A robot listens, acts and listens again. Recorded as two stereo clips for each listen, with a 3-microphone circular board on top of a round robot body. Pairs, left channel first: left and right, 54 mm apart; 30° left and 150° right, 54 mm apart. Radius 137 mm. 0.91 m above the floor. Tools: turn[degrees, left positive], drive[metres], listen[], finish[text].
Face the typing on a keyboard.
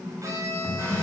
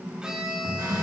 Thought: The typing on a keyboard: 165° right.
Action: turn[-165]
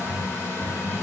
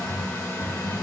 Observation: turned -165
Thought: The typing on a keyboard is now 10° left.
Action: turn[10]
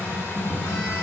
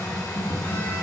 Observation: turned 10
Action: finish[Facing the typing on a keyboard.]